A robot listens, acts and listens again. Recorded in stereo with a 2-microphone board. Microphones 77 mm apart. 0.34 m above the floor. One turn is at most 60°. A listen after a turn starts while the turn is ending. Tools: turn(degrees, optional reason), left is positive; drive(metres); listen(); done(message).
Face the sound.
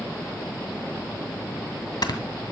turn(degrees=60, reason="The snoring: about 65° left or 115° left.")
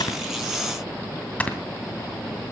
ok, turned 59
turn(degrees=20, reason="So it is at 20° left.")
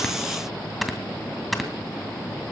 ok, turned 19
done("Found it: snoring, straight ahead.")